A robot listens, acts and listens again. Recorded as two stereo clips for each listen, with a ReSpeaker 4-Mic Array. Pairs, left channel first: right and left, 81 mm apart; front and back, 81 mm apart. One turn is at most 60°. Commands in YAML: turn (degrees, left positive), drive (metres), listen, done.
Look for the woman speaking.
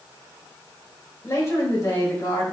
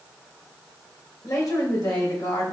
turn: -35
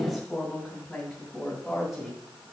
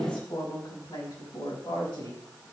done: "Found it: a woman speaking, straight ahead, over 4 m away."